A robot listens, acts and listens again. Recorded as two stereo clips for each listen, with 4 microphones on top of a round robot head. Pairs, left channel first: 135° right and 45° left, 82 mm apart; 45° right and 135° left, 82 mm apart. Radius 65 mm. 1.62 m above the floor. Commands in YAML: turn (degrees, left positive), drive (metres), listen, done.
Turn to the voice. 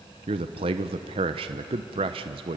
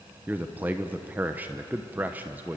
turn: 65
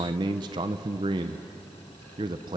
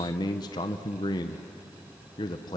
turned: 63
done: "Found it: a man speaking, straight ahead."